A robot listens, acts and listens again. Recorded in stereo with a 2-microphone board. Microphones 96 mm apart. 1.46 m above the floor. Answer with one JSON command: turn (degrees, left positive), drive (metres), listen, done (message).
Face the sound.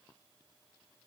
{"listen": true}
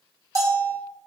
{"turn": -35}
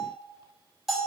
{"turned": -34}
{"done": "Facing the bell, 2 to 4 m away."}